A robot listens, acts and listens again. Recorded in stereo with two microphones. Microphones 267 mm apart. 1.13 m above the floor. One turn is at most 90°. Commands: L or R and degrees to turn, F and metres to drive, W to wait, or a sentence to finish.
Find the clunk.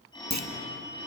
R90
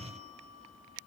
I heard a clunk from this way, but can't make it out now.